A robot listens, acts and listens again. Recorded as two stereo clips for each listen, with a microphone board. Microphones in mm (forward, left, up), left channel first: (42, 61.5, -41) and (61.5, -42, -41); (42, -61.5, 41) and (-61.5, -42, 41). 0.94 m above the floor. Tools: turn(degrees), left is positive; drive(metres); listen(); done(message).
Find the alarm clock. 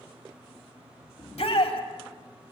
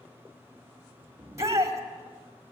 listen()
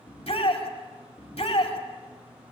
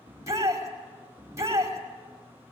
listen()
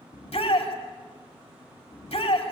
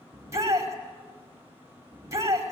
done("I can't make out an alarm clock, only a shout.")